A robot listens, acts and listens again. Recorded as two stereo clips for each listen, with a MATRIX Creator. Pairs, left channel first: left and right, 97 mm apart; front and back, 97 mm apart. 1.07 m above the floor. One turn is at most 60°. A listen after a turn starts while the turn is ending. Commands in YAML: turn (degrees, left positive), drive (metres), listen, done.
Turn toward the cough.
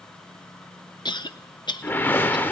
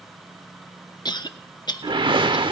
turn: 45
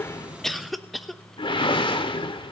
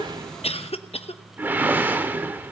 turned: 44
done: "Facing the cough, under 1 m away."